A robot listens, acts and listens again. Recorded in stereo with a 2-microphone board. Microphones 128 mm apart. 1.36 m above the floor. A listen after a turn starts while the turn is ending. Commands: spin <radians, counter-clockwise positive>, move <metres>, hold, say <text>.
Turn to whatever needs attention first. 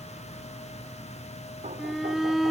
spin 0.52
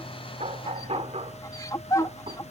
spin 2.71
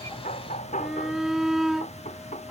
say Found it: a shout, straight ahead.